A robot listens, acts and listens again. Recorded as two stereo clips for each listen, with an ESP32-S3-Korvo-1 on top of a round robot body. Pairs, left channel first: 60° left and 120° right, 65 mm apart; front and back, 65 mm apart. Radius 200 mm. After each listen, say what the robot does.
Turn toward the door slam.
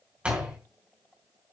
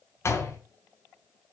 Turn 45° right.
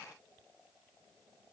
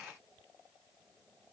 I heard a door slam from this way, but can't make it out now.